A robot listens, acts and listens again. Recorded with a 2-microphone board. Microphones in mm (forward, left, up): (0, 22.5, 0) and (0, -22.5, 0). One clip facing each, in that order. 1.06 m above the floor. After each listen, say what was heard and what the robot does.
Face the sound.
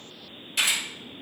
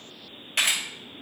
The camera shutter: about 50° right or 130° right. Turn 50° right.
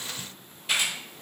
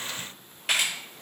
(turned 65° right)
So it is at 70° right. Turn 70° right.
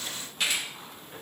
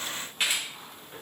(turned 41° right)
The camera shutter is now 25° right. Turn 25° right.
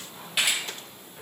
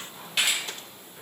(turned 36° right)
The camera shutter is now 10° left. Turn 10° left.
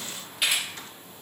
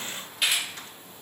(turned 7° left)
Facing the camera shutter, 1 to 2 m away.